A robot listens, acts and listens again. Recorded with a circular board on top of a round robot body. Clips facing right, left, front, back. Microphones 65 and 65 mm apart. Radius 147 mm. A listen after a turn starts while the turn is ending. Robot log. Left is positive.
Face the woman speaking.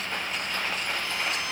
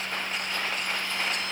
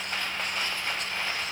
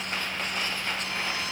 cmd idle
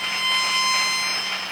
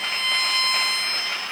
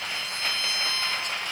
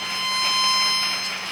cmd idle
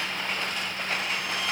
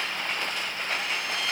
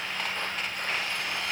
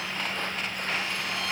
end: I can't make out a woman speaking, only a violin.